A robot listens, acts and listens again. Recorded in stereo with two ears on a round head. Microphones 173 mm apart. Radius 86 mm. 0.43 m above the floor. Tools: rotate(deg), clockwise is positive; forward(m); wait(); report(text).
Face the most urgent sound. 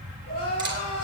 rotate(-50)
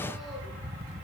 wait()
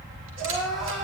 report("Found it: crying, straight ahead.")